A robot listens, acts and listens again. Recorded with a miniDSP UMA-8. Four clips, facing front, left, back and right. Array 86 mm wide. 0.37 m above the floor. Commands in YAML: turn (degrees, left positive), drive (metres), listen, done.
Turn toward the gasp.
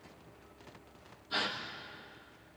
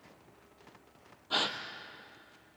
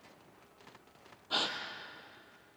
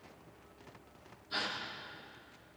turn: 120
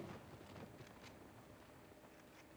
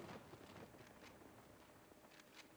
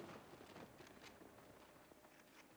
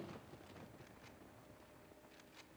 done: "I heard a gasp from this way, but can't make it out now."